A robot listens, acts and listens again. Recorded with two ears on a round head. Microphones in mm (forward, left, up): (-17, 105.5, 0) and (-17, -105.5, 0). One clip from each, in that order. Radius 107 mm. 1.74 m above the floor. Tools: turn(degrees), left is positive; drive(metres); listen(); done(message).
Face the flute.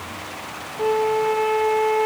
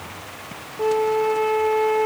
turn(degrees=30)
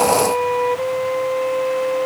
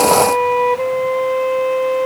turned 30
turn(degrees=-20)
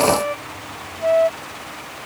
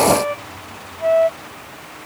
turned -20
done("Found it: a flute, straight ahead.")